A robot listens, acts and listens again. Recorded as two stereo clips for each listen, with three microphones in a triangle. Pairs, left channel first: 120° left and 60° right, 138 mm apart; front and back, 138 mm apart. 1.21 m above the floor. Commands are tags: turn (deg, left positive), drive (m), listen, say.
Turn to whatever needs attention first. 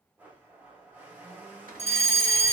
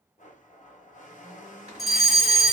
<turn deg="90"/>
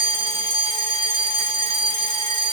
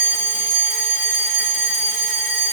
<turn deg="-10"/>
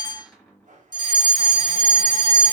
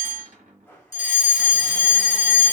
<say>Found it: a fire alarm, straight ahead, 1 to 2 m away.</say>